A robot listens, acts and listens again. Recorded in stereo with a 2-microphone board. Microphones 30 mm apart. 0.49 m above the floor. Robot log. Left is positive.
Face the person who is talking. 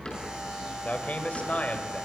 note: The man speaking: about 60° left or 120° left.
cmd yaw +60
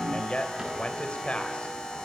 note: So it is at 50° left.
cmd yaw +50
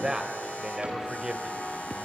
note: The man speaking is now 25° right.
cmd yaw -25
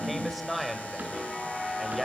end: Facing the man speaking, 2 to 4 m away.